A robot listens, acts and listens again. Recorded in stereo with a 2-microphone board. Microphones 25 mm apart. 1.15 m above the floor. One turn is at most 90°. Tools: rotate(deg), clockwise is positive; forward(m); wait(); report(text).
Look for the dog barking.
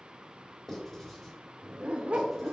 rotate(60)
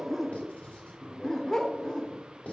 rotate(-30)
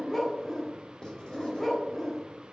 rotate(-15)
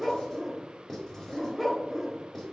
report("Found it: a dog barking, straight ahead.")